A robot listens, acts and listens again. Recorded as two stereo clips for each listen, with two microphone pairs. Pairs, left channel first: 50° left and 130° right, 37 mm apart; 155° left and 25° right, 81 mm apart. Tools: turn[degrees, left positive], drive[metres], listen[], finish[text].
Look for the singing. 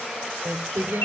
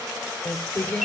Thought: The singing: 130° right.
Action: turn[-130]
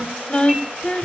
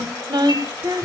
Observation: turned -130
Action: finish[Found it: singing, straight ahead, 2 to 4 m away.]